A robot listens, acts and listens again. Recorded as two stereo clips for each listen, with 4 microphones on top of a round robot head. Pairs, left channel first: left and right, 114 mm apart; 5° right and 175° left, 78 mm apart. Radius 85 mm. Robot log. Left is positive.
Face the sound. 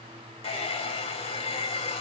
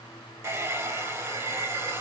note: The hair dryer: 120° left.
cmd yaw +120
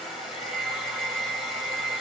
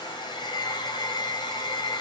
end: Found it: a hair dryer, straight ahead, 2 to 4 m away.